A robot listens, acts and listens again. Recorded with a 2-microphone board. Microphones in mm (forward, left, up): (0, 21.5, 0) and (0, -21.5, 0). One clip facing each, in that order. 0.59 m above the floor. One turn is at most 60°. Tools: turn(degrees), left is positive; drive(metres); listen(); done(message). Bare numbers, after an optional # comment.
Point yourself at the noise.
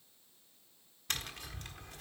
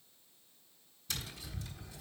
# The tapping: about 55° left or 125° left.
turn(55)
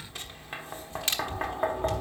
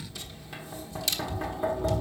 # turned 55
# So it is at 50° left.
turn(50)
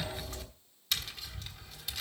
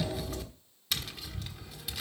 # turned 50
done("Found it: tapping, straight ahead, 1 to 2 m away.")